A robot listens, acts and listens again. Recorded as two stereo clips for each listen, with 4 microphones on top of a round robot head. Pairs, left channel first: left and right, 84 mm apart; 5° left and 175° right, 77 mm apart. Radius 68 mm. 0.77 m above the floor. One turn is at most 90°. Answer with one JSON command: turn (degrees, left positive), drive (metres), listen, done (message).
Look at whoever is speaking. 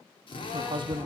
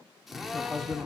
{"turn": -80}
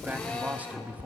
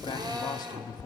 {"turn": -20}
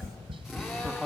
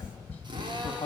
{"done": "Facing the man speaking."}